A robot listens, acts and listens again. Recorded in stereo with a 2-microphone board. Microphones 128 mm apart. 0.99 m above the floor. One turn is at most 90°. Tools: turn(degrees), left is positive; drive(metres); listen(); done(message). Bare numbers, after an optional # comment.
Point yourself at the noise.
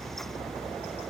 listen()
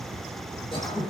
# The throat clearing: about 40° left or 140° left.
turn(40)
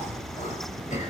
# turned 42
# So it is at 95° left.
turn(90)
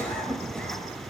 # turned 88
# The throat clearing is now 10° left.
turn(10)
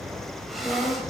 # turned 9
done("Found it: throat clearing, straight ahead, over 4 m away.")